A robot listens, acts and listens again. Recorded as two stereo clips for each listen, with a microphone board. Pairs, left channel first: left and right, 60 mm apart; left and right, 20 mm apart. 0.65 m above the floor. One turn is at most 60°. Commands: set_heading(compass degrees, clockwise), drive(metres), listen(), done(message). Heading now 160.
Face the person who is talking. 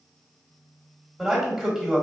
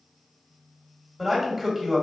set_heading(190)
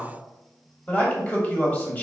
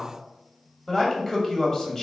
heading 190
set_heading(165)
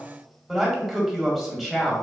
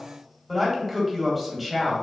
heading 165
done("Facing the man speaking, 1 to 2 m away.")